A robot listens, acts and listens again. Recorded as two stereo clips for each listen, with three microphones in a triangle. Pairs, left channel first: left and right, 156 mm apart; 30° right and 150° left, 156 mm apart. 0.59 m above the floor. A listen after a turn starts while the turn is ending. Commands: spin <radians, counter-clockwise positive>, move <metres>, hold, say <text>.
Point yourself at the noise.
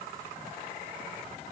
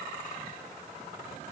hold
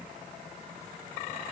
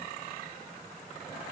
hold
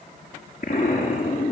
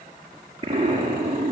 spin 1.66
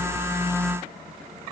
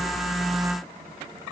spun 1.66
say I heard an explosion from this way, but can't make it out now.